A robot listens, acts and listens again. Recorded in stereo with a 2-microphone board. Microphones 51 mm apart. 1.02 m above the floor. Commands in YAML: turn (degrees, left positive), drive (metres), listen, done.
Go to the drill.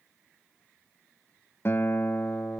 listen: true
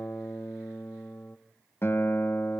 listen: true
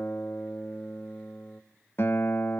done: "I can't make out a drill, only a guitar."